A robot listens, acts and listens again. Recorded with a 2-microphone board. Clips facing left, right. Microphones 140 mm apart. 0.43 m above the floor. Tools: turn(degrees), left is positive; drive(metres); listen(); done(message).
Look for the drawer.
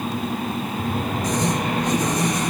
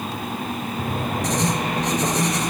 turn(degrees=-50)
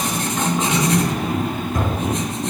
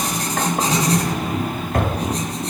turn(degrees=-75)
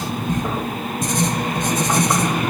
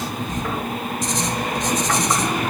listen()
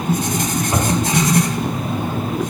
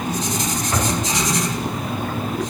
turn(degrees=20)
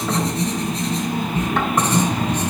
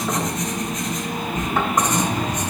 listen()
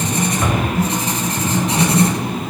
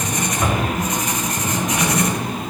done("Found it: a drawer, straight ahead.")